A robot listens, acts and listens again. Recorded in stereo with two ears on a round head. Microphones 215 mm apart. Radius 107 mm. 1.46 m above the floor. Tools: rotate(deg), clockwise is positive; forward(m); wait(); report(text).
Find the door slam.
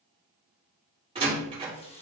rotate(25)
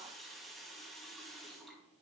wait()
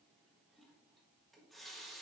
report("I heard a door slam, but can't make it out now. It was about straight ahead or 130° right.")